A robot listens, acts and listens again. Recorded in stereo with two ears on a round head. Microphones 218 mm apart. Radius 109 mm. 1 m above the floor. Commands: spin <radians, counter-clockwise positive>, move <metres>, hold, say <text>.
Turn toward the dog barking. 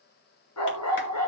spin 1.31
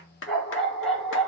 say Facing the dog barking.